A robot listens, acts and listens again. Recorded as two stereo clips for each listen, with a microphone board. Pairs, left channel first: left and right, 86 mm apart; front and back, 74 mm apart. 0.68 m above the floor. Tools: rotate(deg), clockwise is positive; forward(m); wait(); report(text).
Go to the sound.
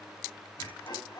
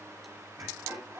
rotate(-125)
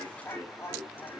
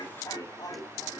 rotate(-30)
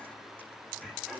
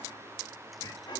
forward(1.0)
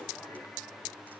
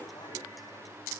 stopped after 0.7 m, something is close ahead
wait()
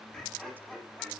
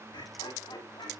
report("Something is in my way. I am facing the laughter but have not reached it.")